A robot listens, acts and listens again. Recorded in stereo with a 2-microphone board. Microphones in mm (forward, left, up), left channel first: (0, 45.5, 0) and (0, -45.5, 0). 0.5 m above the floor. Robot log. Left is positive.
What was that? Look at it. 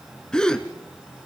cmd yaw +30
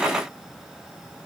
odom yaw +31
cmd idle
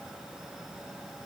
end: I heard a gasp, but can't make it out now. It was about 25° right or 140° left.